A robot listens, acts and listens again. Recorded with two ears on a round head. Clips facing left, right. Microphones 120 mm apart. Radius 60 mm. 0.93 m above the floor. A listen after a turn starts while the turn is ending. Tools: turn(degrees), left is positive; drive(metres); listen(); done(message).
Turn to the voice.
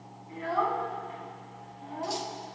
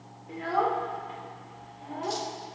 turn(degrees=-60)
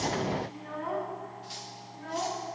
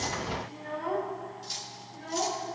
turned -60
turn(degrees=-60)
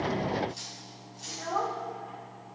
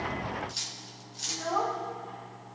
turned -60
done("Facing the child speaking.")